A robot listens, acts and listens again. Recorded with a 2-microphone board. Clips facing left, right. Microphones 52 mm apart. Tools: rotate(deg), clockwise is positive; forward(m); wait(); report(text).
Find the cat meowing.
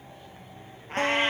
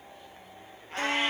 rotate(-45)
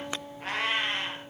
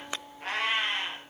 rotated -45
report("Found it: a cat meowing, straight ahead.")